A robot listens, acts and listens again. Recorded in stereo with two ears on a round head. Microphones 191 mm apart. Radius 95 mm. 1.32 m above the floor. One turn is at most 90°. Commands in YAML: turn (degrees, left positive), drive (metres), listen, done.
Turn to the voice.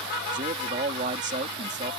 turn: -35
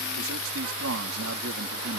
turn: -90
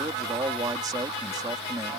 turn: -20
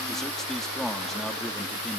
done: "Facing the man speaking."